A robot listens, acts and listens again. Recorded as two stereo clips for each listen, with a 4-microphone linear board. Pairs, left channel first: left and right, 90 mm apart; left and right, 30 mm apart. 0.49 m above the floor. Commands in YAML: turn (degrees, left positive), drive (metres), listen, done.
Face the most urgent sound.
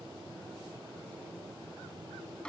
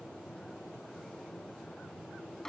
listen: true
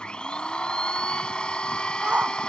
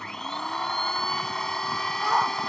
turn: -30
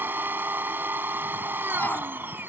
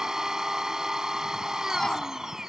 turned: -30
listen: true
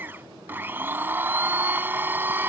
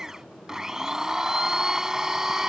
listen: true
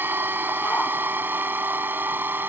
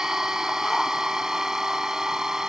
done: "I heard a shout, but can't make it out now. It was about 15° left or 135° right."